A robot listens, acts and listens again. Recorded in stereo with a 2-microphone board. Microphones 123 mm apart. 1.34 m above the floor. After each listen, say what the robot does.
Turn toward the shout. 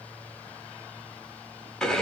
Keep listening.
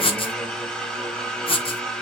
Keep listening.
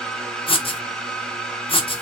I can't make out a shout to turn to.